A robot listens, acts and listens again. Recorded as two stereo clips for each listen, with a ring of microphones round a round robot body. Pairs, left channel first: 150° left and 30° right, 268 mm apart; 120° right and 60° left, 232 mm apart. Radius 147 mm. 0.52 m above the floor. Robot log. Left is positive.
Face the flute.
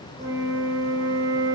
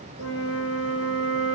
note: The flute: 105° right.
cmd yaw -105
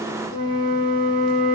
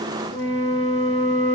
end: Found it: a flute, straight ahead.